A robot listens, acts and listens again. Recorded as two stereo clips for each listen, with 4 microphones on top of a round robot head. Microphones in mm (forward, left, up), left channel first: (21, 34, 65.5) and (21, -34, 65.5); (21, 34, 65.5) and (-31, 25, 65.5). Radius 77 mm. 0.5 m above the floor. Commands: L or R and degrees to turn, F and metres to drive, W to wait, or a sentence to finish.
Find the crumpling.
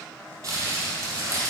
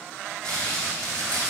R50
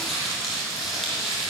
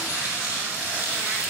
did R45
Facing the crumpling, 2 to 4 m away.